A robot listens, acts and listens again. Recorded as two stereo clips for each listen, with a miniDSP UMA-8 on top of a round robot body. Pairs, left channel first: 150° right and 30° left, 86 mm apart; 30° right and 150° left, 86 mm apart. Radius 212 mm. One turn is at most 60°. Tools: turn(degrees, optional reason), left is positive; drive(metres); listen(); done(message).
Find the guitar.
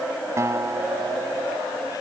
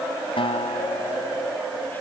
turn(degrees=-30, reason="The guitar: 30° right.")
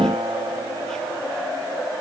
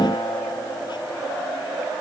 listen()
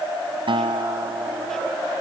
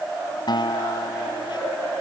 done("Facing the guitar.")